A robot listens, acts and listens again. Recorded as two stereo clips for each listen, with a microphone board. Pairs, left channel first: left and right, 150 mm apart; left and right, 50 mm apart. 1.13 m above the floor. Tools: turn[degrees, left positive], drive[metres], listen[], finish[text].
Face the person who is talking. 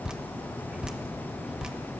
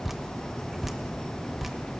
Action: listen[]
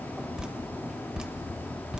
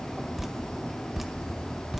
Action: listen[]
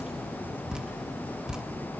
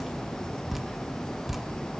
Action: finish[I can't make out anyone speaking, only dripping.]